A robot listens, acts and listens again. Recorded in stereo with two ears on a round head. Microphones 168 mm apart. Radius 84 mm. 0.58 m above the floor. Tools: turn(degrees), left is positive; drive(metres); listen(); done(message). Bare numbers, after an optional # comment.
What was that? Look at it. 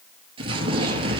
# The explosion: about 30° right or 150° right.
turn(-30)
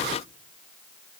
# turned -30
listen()
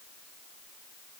done("I heard an explosion, but can't make it out now. It was about straight ahead or 120° right.")